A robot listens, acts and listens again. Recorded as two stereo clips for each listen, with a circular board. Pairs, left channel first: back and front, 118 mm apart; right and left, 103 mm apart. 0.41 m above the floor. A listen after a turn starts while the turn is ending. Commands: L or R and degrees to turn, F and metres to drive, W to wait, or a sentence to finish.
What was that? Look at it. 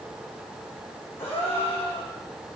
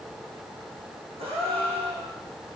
L110
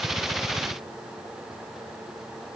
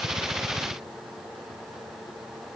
I heard a gasp from this way, but can't make it out now.